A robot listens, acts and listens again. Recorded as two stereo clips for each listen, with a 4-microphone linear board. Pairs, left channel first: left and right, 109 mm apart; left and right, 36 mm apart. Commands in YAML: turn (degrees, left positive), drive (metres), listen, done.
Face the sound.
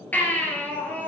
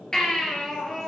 turn: 30
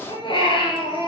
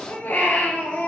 turn: 130
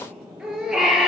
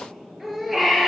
done: "Facing the baby crying."